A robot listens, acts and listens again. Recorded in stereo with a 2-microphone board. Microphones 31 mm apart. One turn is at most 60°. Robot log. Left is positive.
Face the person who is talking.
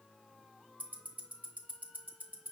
cmd idle
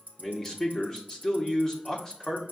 note: The man speaking: about 15° left or 165° left.
cmd yaw +15
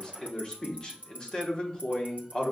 note: So it is at 150° left.
cmd yaw +60
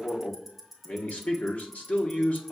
note: The man speaking is now 100° left.
cmd yaw +60
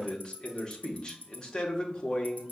note: The man speaking is now 35° left.
cmd yaw +35
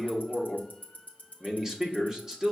note: The man speaking is now 20° right.
cmd yaw -20
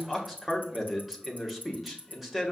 end: Facing the man speaking.